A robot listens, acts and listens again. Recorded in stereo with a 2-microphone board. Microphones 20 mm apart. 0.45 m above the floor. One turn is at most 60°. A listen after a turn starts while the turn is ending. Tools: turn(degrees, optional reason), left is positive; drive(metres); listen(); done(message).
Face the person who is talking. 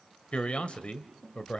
turn(degrees=60, reason="The man speaking: about 65° left or 115° left.")
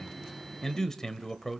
turn(degrees=25, reason="So it is at 25° left.")
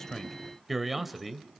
done("Found it: a man speaking, straight ahead, 1 to 2 m away.")